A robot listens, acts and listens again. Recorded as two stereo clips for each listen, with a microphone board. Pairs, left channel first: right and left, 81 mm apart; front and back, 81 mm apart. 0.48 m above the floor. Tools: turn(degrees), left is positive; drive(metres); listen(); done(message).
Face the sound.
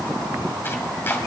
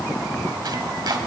turn(degrees=-150)
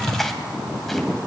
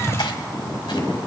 done("Found it: chopping, straight ahead.")